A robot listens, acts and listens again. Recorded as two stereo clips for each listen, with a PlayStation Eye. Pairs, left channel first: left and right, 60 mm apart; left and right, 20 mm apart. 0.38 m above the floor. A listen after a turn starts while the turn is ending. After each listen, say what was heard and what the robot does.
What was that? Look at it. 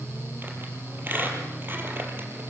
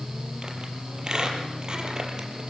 The squeak: about 35° right or 145° right. Turn 35° right.
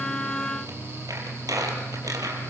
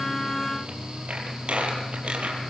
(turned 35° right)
So it is at 105° right. Turn 105° right.
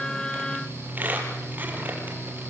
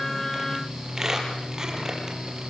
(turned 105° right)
The squeak is now 30° right. Turn 30° right.
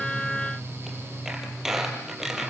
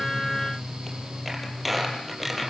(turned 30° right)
Facing the squeak, over 4 m away.